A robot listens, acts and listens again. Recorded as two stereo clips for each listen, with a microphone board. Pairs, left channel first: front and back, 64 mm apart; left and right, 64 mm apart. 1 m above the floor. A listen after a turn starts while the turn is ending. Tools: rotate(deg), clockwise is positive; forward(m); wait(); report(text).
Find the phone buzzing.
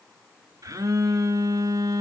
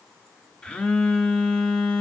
rotate(-165)
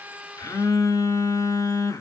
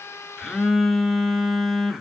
report("Found it: a phone buzzing, straight ahead, under 1 m away.")